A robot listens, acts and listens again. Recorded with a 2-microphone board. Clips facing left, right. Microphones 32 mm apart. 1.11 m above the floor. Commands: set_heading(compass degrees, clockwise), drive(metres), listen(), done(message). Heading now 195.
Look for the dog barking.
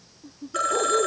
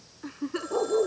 set_heading(225)
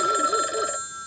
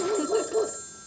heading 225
set_heading(10)
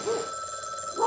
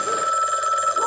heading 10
set_heading(350)
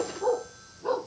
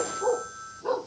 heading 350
done("Facing the dog barking.")